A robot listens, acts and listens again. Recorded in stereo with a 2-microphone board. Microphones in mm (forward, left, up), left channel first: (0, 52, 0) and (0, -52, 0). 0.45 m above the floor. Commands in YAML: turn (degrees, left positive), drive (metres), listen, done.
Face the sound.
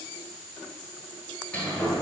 turn: 30
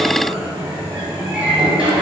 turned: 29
turn: -15
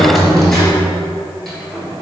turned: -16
done: "Facing the sliding door, 1 to 2 m away."